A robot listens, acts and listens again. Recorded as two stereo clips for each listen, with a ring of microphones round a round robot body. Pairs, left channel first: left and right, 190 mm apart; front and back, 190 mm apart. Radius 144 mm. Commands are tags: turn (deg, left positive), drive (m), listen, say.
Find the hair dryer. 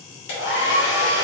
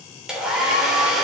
<turn deg="95"/>
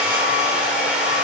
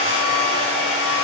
<say>Facing the hair dryer, 2 to 4 m away.</say>